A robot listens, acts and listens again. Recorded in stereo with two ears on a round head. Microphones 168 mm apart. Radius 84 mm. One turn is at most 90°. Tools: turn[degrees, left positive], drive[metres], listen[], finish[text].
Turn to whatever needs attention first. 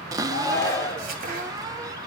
Thought: The shout: about 20° left or 160° left.
Action: turn[20]
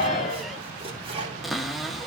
Thought: So it is at 140° left.
Action: turn[90]
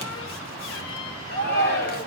Thought: The shout is now 55° left.
Action: turn[55]
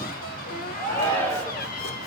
Thought: The shout is now 10° left.
Action: turn[10]
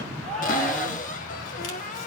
Action: finish[Facing the shout, 2 to 4 m away.]